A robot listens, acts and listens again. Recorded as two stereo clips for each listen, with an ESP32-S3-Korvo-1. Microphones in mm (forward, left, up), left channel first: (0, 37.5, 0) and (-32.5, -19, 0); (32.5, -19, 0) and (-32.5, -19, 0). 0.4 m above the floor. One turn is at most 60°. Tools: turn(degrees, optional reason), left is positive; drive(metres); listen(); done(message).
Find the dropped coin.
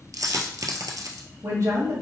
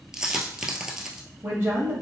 turn(degrees=-60, reason="The dropped coin: 100° right.")
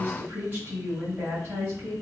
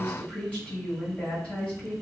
turn(degrees=-40, reason="Nothing new. It was at 40° right.")
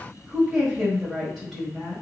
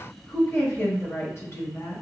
done("I heard a dropped coin from this way, but can't make it out now.")